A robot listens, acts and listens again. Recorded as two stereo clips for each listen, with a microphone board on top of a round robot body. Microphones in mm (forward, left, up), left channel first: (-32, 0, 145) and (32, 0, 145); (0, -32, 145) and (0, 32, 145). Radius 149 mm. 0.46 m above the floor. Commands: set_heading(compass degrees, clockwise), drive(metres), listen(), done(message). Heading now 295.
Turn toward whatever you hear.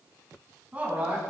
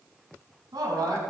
set_heading(225)
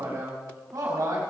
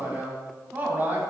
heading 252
set_heading(222)
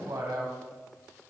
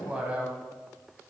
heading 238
set_heading(223)
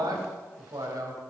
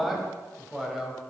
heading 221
done("Facing the man speaking.")